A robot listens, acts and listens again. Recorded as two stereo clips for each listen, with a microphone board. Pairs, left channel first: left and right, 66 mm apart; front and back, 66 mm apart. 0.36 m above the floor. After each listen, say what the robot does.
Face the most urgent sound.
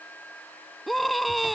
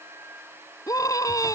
Found it: a scream, straight ahead.